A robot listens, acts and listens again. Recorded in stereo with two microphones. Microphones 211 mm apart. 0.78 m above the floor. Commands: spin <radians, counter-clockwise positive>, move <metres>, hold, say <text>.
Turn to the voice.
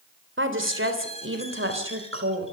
spin -1.57
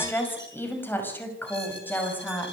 spin 0.17
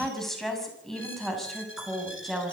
say Facing the woman speaking, over 4 m away.